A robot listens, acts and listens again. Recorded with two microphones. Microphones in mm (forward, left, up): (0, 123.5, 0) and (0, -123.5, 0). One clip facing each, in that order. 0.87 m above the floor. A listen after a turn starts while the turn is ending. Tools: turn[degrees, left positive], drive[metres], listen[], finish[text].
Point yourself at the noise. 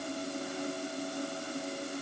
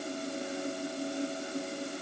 Action: listen[]
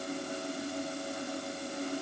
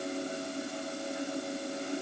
Action: listen[]
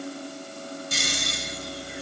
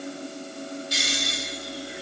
Thought: The snoring: about 50° left or 130° left.
Action: turn[50]
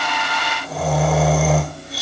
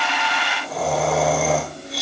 Action: finish[Facing the snoring.]